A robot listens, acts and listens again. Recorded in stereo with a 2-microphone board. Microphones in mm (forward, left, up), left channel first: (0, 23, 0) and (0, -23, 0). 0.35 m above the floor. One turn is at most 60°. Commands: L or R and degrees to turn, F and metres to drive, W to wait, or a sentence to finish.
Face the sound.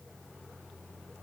W
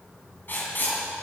L45
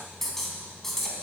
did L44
L10
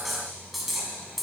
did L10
Facing the writing.